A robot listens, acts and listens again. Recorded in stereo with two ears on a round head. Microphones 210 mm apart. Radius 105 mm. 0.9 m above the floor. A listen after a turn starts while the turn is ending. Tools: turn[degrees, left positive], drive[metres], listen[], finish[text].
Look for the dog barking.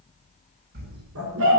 Thought: The dog barking: about 70° right or 110° right.
Action: turn[-70]
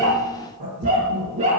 Thought: So it is at 30° right.
Action: turn[-30]
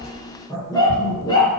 Thought: The dog barking is now 20° left.
Action: turn[20]
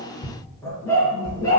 Thought: The dog barking is now 15° left.
Action: turn[15]
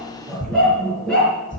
Action: finish[Facing the dog barking, over 4 m away.]